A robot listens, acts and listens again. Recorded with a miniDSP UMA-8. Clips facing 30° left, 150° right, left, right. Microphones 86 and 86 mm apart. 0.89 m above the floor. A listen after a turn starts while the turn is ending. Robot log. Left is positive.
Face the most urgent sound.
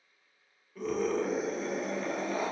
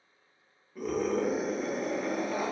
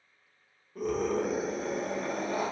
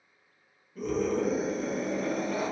note: The scream: 130° left.
cmd yaw +130
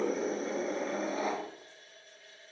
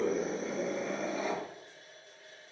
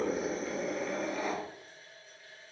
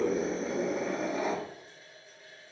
note: The scream is now 15° right.
cmd yaw -15
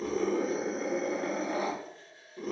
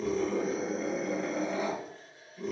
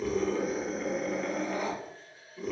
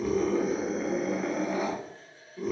end: Found it: a scream, straight ahead, 1 to 2 m away.